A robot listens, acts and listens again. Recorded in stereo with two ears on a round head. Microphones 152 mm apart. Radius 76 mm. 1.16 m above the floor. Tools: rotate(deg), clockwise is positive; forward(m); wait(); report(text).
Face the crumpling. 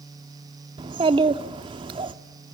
wait()
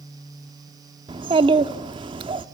wait()
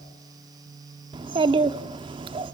report("I can't make out crumpling, only a child speaking.")